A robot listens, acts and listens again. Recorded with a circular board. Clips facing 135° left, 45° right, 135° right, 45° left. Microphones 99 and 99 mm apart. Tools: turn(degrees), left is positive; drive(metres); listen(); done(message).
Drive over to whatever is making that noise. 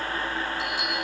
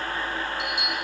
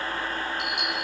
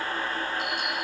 turn(degrees=-115)
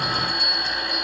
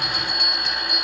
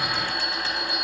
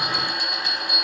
turn(degrees=-30)
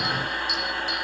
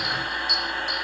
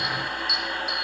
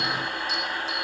turn(degrees=-10)
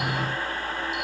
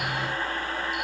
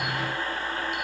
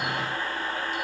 listen()
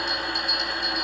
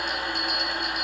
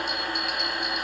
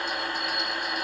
drive(metres=1.0)
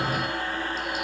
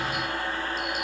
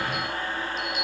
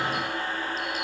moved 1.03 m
drive(metres=1.0)
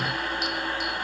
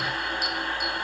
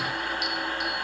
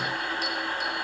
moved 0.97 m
listen()
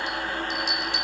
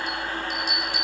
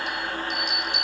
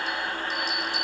drive(metres=1.0)
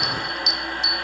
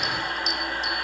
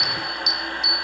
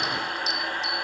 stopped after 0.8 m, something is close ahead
done("Arrived at the bell, straight ahead.")